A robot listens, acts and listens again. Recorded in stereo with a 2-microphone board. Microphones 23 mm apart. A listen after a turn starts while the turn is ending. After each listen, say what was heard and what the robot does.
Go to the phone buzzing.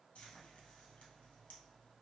Keep listening.
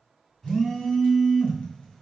The phone buzzing: about 20° left or 160° left. Turn 20° left.
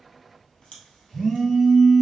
Drive 1.0 m forward.
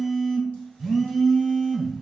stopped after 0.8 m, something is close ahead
I am next to the phone buzzing.